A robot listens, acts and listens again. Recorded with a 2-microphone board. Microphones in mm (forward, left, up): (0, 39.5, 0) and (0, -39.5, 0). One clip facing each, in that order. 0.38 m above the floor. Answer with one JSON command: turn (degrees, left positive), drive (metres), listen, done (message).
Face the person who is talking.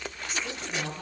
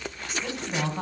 {"turn": -45}
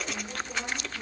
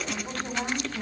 {"turn": -80}
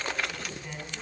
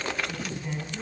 {"done": "Facing the woman speaking, 2 to 4 m away."}